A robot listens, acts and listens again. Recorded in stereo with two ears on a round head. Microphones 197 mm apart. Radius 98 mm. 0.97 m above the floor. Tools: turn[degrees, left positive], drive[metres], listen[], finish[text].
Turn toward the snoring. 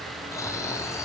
Action: turn[30]
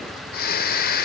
Thought: So it is at 140° left.
Action: turn[140]
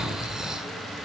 Action: finish[Found it: snoring, straight ahead.]